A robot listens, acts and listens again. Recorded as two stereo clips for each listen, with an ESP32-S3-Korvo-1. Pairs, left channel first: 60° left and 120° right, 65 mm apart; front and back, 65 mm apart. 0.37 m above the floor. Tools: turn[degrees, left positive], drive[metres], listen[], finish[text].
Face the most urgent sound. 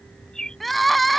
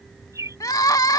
Thought: The crying: 30° right.
Action: turn[-30]
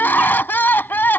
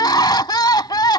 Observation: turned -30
Action: finish[Found it: crying, straight ahead.]